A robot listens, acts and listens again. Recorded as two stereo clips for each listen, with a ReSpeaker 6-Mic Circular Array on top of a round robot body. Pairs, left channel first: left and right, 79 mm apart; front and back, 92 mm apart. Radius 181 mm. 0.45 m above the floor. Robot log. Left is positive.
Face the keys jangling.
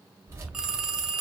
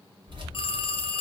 note: The keys jangling: 145° right.
cmd yaw -145
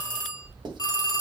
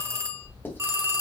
end: Found it: keys jangling, straight ahead, 2 to 4 m away.